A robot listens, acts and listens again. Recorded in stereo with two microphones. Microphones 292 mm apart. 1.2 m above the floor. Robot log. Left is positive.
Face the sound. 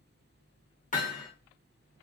note: The hammering: about 30° left or 150° left.
cmd yaw +30
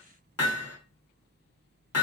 note: So it is at 125° left.
cmd yaw +125
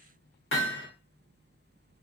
note: The hammering is now 40° left.
cmd yaw +40
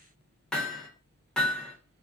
end: Facing the hammering, under 1 m away.